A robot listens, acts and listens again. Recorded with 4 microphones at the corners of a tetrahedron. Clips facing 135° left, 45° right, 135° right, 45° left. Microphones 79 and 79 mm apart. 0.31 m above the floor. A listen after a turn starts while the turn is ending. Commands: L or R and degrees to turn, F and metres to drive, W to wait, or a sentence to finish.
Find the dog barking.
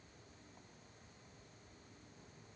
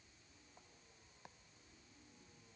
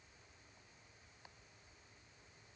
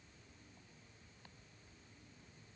W
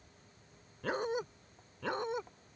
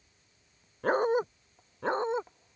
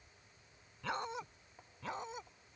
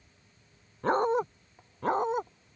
L10
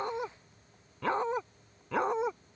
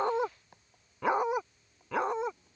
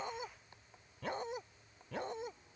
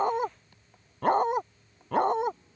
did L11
L45
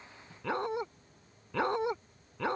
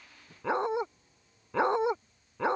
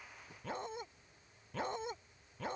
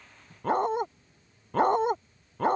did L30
L20
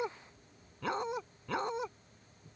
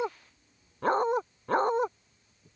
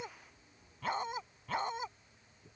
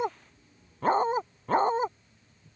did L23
Found it: a dog barking, straight ahead.